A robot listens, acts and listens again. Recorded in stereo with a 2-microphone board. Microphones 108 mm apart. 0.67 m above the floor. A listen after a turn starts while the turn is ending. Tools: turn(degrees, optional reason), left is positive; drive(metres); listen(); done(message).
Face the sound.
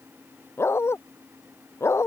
turn(degrees=25, reason="The dog barking: about 25° left or 155° left.")
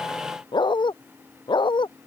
turn(degrees=130, reason="So it is at 130° left.")
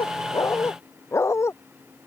turn(degrees=25, reason="The dog barking is now 25° left.")
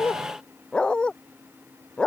turn(degrees=10, reason="The dog barking is now 10° left.")
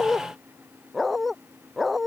done("Found it: a dog barking, straight ahead.")